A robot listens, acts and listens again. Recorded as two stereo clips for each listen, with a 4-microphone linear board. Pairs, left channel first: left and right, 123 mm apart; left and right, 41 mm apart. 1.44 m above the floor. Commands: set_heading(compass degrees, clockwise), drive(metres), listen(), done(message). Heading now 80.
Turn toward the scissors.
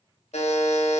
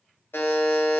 listen()
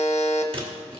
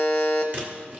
set_heading(130)
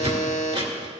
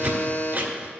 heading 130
set_heading(200)
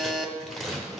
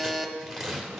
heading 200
done("Found it: scissors, straight ahead, 1 to 2 m away.")